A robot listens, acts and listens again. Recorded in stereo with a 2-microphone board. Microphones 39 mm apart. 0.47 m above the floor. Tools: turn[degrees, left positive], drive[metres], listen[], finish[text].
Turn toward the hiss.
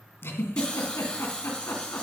Thought: The hiss: about 20° left or 160° left.
Action: turn[20]
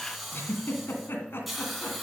Action: finish[Found it: a hiss, straight ahead.]